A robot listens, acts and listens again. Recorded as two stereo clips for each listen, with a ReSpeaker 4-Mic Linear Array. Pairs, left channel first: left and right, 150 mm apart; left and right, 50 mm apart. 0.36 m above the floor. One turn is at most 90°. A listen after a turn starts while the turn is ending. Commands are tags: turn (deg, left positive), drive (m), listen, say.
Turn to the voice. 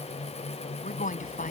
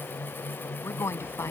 <turn deg="65"/>
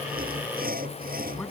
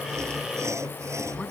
<listen/>
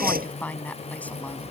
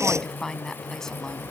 <turn deg="10"/>
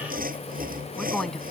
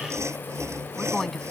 <say>Facing the woman speaking.</say>